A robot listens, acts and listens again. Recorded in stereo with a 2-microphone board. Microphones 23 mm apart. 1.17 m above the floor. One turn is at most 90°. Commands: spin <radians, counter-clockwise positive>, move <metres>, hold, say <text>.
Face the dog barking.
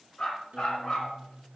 spin 0.70
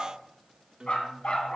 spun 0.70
spin 1.57
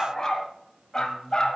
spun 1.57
spin 0.61
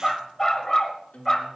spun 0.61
spin 0.35
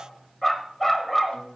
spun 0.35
say Facing the dog barking.